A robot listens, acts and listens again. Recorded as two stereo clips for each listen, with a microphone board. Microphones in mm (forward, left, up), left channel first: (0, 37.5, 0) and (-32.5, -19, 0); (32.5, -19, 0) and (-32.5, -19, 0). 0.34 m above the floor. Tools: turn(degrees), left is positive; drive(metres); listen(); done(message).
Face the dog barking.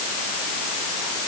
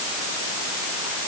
listen()
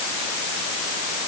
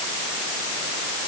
listen()
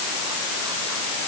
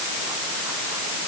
done("I can't make out a dog barking to turn to.")